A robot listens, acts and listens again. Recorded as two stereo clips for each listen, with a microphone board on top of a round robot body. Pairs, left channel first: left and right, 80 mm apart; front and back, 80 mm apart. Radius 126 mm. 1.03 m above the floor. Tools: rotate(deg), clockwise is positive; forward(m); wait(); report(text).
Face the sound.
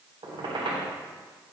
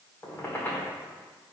rotate(65)
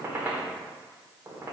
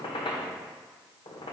rotate(25)
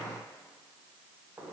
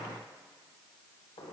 rotate(15)
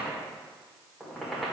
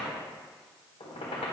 report("Facing the squeak, 1 to 2 m away.")